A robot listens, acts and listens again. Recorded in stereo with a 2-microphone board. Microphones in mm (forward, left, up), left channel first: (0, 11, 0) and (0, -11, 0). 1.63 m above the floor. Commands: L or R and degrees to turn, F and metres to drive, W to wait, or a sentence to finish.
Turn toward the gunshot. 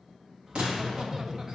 R60
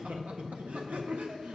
W
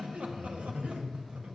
I heard a gunshot, but can't make it out now. It was about straight ahead or 60° right.